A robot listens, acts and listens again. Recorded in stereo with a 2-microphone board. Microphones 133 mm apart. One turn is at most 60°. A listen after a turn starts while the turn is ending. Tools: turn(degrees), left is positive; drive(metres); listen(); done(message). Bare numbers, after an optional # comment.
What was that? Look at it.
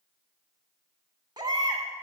# The baby crying: about 30° right or 150° right.
turn(-30)
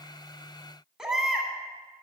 done("Found it: a baby crying, straight ahead, 2 to 4 m away.")